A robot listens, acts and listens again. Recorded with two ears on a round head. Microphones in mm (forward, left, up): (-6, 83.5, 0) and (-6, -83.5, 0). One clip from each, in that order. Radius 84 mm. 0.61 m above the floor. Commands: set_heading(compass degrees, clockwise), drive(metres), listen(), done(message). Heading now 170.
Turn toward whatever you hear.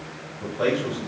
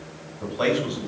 set_heading(235)
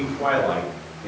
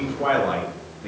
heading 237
done("Found it: a man speaking, straight ahead, over 4 m away.")